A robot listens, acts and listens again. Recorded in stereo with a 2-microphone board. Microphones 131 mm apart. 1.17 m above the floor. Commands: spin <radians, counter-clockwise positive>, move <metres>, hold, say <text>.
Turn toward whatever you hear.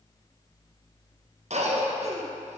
spin -1.05
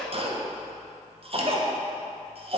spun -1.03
spin -0.96
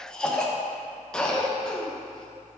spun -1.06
say Found it: a cough, straight ahead.